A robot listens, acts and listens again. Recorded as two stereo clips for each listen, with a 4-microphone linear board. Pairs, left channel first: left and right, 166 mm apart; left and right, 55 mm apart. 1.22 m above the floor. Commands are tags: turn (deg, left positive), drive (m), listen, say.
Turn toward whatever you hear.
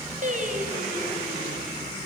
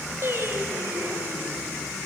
<turn deg="-50"/>
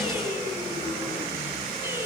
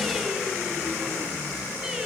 <listen/>
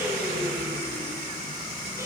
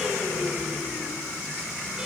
<listen/>
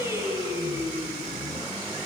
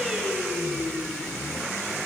<turn deg="-20"/>
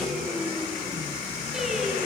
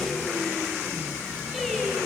<say>Facing the singing.</say>